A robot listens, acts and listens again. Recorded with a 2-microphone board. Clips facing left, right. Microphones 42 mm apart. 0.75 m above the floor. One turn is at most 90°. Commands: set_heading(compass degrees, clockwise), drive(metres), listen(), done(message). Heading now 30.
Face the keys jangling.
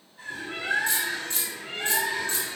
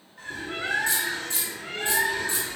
set_heading(60)
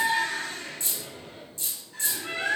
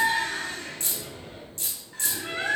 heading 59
set_heading(149)
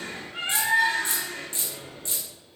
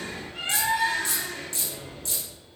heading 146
set_heading(121)
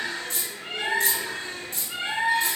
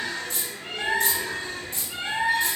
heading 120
done("Found it: keys jangling, straight ahead, 1 to 2 m away.")